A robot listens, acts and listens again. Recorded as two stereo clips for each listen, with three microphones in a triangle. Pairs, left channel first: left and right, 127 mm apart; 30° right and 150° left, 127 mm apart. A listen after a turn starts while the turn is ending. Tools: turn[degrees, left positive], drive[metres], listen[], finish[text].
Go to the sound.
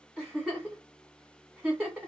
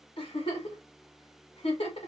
Thought: The giggle: 10° right.
Action: turn[-10]
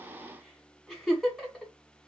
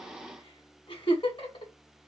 Action: drive[1.0]
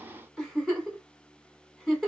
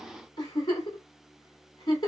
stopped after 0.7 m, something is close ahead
Action: finish[Arrived at the giggle, straight ahead.]